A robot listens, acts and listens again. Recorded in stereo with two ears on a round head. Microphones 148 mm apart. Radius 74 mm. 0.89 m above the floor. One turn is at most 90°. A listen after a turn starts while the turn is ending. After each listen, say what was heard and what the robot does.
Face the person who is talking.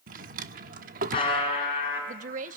The woman speaking: about 50° right or 130° right. Turn 50° right.
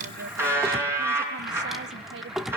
Keep listening.
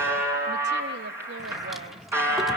Keep listening.
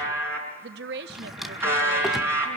So it is at 75° right. Turn 75° right.
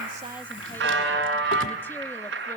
Keep listening.
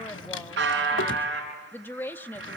The woman speaking is now 15° left. Turn 15° left.
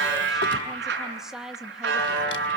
Facing the woman speaking, 1 to 2 m away.